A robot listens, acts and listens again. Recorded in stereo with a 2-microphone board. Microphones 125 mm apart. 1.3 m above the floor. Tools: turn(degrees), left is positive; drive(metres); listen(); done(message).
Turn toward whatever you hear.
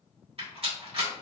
turn(degrees=-50)
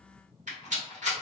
turn(degrees=-80)
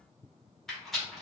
done("Found it: a rattle, straight ahead, 1 to 2 m away.")